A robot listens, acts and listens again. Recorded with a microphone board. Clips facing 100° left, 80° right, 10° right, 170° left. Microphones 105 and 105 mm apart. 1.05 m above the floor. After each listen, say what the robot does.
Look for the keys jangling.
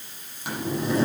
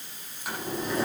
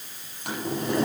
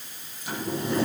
Keep listening.
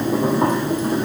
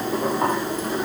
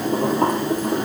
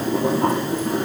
Keep listening.
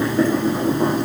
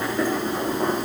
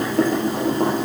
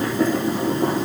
I can't make out keys jangling to turn to.